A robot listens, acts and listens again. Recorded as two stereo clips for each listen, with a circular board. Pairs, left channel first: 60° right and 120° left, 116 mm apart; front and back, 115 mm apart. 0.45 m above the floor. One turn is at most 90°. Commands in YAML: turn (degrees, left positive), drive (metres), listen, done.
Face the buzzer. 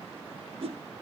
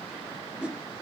listen: true
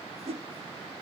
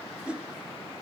listen: true
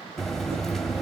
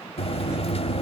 turn: 25
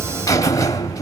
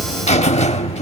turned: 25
done: "Facing the buzzer, under 1 m away."